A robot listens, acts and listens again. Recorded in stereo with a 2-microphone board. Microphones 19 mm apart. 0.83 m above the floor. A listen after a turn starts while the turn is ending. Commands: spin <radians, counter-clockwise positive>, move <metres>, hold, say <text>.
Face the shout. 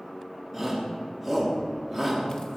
spin -0.52
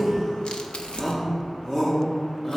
spin 0.44
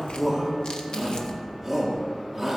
say Facing the shout.